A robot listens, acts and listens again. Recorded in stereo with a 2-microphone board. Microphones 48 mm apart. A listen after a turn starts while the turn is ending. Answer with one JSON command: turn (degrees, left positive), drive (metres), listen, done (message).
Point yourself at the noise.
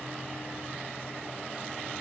{"listen": true}
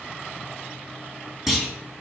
{"turn": -30}
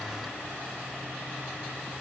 {"listen": true}
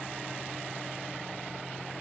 {"done": "I heard a clunk, but can't make it out now. It was about 25° left or 145° right."}